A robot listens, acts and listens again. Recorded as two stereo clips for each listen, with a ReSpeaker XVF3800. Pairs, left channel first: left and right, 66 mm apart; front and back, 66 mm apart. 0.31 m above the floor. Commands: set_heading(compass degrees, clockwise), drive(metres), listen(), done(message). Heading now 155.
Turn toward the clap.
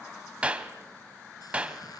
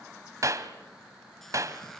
set_heading(310)
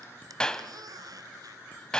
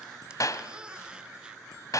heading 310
set_heading(295)
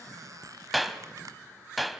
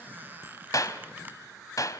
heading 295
done("Found it: a clap, straight ahead.")